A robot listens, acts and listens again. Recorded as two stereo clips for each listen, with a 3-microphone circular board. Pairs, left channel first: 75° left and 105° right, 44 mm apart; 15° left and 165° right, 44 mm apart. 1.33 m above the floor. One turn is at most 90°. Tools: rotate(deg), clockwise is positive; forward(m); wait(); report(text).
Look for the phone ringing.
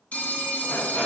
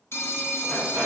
rotate(-20)
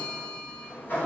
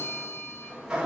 report("Facing the phone ringing.")